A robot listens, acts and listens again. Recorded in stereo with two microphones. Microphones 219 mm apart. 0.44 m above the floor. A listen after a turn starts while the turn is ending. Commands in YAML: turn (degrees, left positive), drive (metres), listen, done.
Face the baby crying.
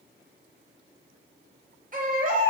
turn: -40
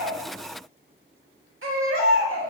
turn: -100
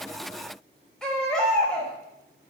done: "Facing the baby crying."